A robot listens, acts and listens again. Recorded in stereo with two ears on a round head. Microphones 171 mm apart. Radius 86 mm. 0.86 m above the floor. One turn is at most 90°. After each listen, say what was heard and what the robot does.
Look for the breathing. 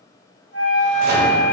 Keep listening.
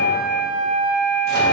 Keep listening.
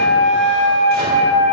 I can't make out breathing to turn to.